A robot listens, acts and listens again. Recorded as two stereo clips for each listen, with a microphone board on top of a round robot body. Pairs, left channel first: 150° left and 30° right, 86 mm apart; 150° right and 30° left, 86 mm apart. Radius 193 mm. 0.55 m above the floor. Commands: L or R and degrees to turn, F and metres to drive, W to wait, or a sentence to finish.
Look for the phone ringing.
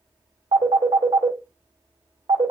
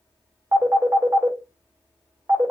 R30
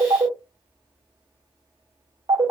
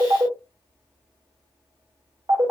R15
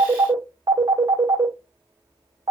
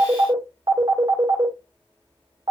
Found it: a phone ringing, straight ahead.